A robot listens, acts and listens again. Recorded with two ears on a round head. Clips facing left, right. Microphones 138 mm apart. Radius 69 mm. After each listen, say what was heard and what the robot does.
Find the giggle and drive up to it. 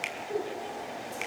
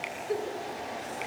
The giggle: about 45° right or 135° right. Turn 45° right.
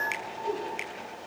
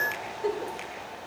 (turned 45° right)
So it is at 95° right. Turn 95° right.
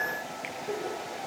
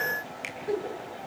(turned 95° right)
The giggle is now 20° right. Turn 20° right.
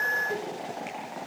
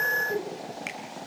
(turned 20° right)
Drive 1.0 m forward.
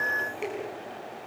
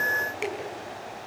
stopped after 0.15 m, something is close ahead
Keep listening.
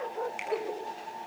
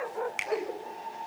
Something is in my way. I am facing the giggle but have not reached it.